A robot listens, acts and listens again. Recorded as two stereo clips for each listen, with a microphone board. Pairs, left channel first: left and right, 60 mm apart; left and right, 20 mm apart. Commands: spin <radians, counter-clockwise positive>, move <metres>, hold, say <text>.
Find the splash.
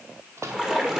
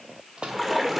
spin -0.52
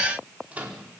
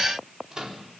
hold
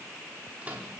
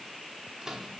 say I heard a splash, but can't make it out now. It was about 20° left or 140° right.